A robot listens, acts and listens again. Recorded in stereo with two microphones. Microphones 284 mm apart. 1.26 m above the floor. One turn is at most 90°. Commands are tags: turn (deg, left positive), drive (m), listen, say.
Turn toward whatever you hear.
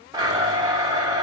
<turn deg="-30"/>
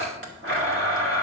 <turn deg="-90"/>
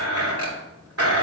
<turn deg="-60"/>
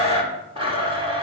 <turn deg="-20"/>
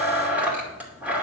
<say>Found it: a blender, straight ahead, 2 to 4 m away.</say>